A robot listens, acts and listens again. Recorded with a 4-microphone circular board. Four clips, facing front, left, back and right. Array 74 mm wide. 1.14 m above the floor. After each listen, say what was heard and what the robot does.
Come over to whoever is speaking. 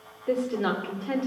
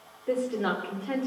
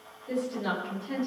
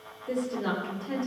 The woman speaking: 30° left. Turn 30° left.
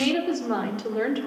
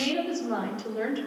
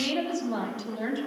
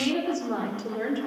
Drive 1.0 m forward.
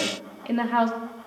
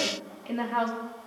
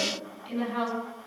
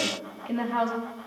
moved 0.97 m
Drive 1.0 m forward.
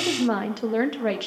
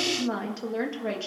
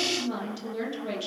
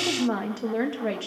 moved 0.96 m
The woman speaking is now 15° right. Turn 15° right.
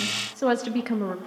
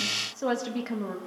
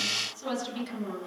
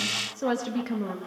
Drive 1.0 m forward.
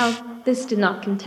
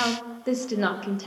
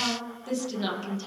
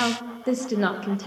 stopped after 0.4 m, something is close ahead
Arrived at the woman speaking, straight ahead.